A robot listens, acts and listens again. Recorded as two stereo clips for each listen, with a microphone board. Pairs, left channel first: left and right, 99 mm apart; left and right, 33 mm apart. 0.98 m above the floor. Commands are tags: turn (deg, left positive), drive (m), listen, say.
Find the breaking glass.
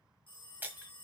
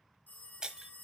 <turn deg="-20"/>
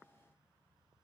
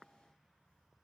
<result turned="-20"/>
<listen/>
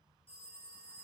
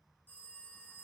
<say>I heard breaking glass, but can't make it out now. It was about straight ahead or 140° right.</say>